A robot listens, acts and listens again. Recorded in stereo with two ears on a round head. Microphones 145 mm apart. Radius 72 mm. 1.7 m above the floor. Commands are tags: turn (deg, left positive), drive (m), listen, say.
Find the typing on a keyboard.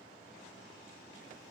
<listen/>
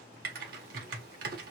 <turn deg="-65"/>
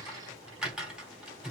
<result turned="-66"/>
<say>Facing the typing on a keyboard, 1 to 2 m away.</say>